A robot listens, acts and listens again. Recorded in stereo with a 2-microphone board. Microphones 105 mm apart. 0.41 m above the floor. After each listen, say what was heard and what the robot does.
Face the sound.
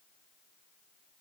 Keep listening.
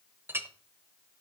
The clink: about 25° right or 155° right. Turn 25° right.
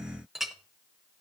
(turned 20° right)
Found it: a clink, straight ahead, under 1 m away.